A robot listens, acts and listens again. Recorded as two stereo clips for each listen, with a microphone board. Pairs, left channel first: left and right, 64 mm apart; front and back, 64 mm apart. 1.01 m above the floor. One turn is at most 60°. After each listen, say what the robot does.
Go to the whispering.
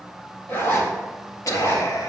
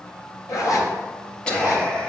Turn 60° left.
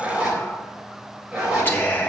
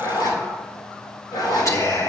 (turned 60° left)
Turn 35° left.
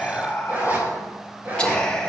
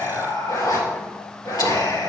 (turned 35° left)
Turn 15° left.
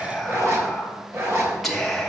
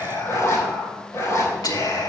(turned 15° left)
Drive 1.0 m forward.
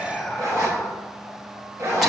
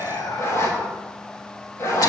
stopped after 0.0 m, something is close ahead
Blocked. The whispering is further on, straight ahead.